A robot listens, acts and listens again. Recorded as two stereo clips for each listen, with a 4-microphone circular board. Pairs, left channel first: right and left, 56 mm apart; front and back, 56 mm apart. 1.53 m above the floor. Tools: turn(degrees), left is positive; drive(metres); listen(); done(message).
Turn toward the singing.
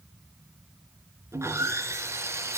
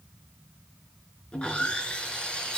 listen()
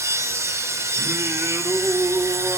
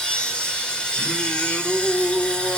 turn(degrees=55)
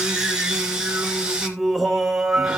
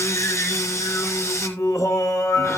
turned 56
done("Found it: singing, straight ahead.")